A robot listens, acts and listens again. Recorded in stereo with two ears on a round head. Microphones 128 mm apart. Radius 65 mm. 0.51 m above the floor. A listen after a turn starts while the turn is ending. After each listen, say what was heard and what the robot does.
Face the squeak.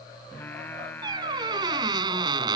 The squeak: about 30° right or 150° right. Turn 30° right.
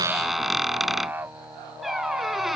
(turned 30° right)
Found it: a squeak, straight ahead.